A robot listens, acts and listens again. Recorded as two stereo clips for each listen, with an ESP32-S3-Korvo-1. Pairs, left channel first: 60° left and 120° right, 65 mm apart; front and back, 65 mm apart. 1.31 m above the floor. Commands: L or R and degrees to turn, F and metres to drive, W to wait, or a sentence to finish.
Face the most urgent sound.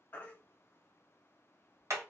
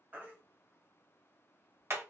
L120
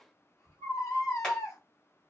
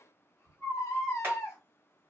L35
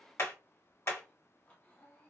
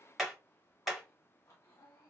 W
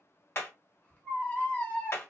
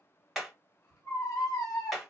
Found it: a baby crying, straight ahead.